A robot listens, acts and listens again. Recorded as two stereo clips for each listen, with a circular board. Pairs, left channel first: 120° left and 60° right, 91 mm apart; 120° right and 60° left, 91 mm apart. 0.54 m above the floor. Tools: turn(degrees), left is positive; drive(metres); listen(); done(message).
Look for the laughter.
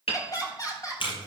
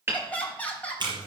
turn(degrees=165)
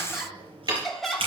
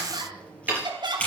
turn(degrees=30)
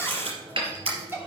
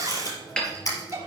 done("Found it: laughter, straight ahead, 2 to 4 m away.")